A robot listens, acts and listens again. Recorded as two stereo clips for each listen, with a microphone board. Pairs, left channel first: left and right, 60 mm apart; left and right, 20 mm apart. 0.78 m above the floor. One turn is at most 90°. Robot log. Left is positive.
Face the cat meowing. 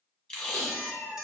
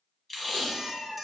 note: The cat meowing: about 55° left or 125° left.
cmd yaw +55
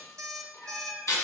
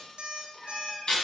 note: So it is at 60° left.
cmd yaw +60
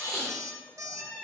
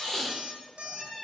note: The cat meowing is now 20° left.
cmd yaw +20
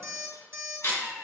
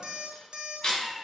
end: Found it: a cat meowing, straight ahead, 2 to 4 m away.